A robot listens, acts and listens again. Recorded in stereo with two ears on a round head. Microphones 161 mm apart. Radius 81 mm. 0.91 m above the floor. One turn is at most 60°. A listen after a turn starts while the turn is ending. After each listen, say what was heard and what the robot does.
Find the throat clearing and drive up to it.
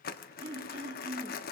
The throat clearing: about 35° right or 145° right. Turn 35° right.
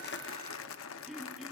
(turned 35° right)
Drive 1.0 m forward.
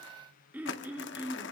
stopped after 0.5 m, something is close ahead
The throat clearing is now 10° right. Turn 10° right.
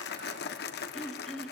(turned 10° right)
Blocked. The throat clearing is further on, straight ahead.